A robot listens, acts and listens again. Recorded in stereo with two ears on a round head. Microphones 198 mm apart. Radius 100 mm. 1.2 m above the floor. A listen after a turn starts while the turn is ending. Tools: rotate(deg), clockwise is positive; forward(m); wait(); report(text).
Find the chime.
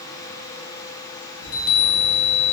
rotate(-70)
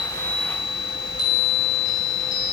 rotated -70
rotate(-20)
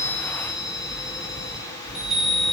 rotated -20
report("Facing the chime, under 1 m away.")